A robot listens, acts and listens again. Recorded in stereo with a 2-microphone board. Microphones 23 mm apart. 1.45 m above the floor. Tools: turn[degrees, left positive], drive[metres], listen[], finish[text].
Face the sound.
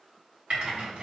Thought: The typing on a keyboard: about 55° right or 125° right.
Action: turn[-55]
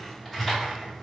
Action: finish[Found it: typing on a keyboard, straight ahead, 1 to 2 m away.]